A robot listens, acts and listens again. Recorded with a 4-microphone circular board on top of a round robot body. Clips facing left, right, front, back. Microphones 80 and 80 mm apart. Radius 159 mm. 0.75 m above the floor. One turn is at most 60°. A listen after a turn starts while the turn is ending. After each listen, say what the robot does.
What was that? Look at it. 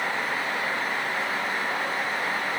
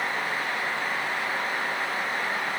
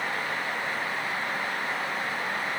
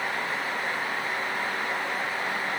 Keep listening.
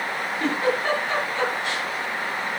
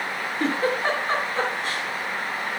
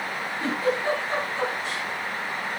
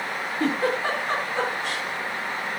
Turn 60° right.
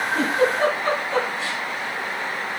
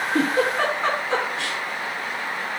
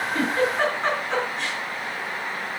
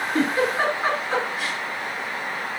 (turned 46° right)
Turn 60° right.
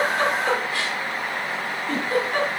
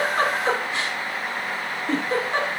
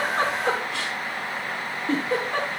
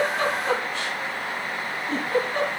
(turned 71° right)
Turn 25° right.
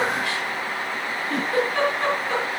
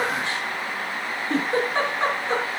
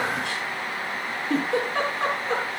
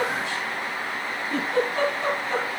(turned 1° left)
Turn 30° right.
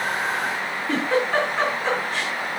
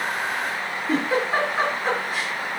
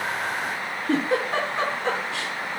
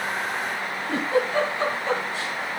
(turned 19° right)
Turn 10° right.
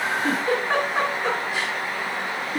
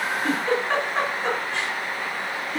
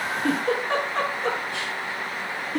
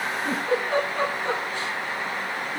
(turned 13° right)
Found it: a giggle, straight ahead, over 4 m away.